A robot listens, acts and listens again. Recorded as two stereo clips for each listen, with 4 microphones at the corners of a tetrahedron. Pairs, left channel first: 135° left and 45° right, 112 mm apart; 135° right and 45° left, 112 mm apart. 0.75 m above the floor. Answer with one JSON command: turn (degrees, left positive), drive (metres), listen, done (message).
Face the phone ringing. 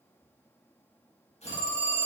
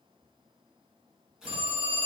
{"turn": 75}
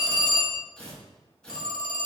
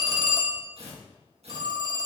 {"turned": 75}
{"done": "Facing the phone ringing."}